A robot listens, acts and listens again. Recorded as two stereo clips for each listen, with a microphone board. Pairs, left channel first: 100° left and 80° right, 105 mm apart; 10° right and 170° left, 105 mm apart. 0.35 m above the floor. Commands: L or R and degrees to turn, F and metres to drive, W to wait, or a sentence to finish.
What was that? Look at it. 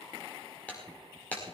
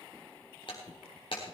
L25
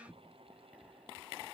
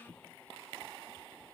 Facing where the breaking glass came from. I can't hear it now.